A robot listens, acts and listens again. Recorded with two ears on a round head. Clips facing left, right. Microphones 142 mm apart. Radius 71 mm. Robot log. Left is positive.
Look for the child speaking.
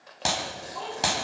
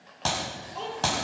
note: The child speaking: about 30° right or 150° right.
cmd yaw -30
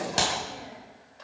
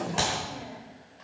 cmd idle
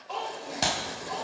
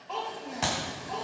end: Facing the child speaking.